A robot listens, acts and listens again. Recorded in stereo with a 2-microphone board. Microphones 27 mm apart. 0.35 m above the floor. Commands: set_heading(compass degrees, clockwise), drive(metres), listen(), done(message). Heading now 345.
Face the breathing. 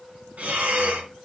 set_heading(55)
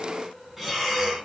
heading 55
set_heading(65)
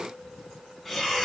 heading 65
done("Facing the breathing, 2 to 4 m away.")